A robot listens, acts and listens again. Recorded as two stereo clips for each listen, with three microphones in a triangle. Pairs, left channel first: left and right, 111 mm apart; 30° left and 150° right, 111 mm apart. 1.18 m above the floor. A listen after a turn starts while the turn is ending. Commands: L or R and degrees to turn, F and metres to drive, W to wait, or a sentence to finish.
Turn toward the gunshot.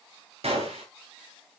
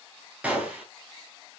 R75
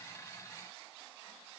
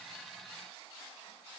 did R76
Facing where the gunshot came from. I can't hear it now.